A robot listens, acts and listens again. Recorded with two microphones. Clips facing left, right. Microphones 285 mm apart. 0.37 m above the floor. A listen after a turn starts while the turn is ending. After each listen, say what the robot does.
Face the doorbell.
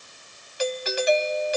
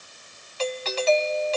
Turn 15° left.
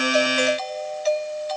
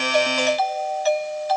Turn 150° left.
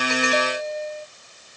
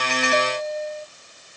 Turn 45° left.
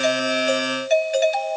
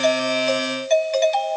Turn 10° left.
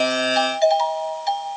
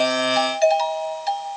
Found it: a doorbell, straight ahead.